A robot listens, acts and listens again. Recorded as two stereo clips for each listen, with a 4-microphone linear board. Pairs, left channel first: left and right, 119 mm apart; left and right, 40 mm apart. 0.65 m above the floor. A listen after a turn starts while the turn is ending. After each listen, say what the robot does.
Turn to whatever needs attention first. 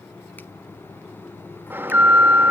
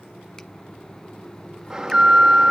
Turn 15° right.
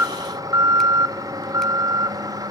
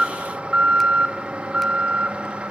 Turn 150° right.
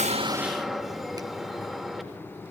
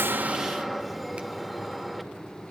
Found it: an alarm, straight ahead, 1 to 2 m away.